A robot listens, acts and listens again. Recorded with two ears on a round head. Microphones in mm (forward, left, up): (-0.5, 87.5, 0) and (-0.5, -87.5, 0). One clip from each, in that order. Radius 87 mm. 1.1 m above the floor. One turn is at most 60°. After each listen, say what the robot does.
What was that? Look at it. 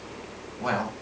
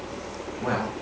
Turn 60° left.
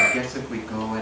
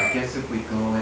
Turn 15° left.
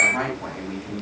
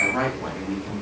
Found it: a man speaking, straight ahead, over 4 m away.